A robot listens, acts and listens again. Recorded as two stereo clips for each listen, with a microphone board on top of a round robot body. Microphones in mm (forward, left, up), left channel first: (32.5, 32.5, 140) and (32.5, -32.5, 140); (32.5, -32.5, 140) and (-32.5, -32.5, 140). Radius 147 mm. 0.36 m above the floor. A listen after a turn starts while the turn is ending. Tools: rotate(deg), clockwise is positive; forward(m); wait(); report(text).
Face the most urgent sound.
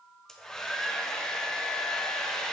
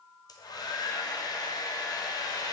wait()
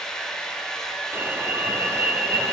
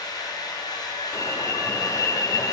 rotate(35)
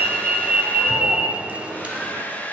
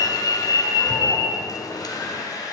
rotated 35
rotate(20)
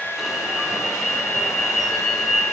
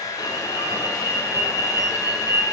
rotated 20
report("Facing the alarm.")